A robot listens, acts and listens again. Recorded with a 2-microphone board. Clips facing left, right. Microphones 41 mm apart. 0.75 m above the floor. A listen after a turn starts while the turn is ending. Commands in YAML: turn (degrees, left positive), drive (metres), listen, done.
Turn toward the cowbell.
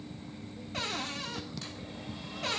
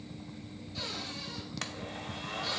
listen: true
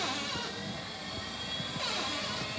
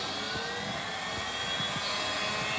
listen: true
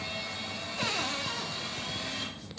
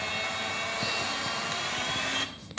done: "I can't make out a cowbell, only a cupboard door and a blender."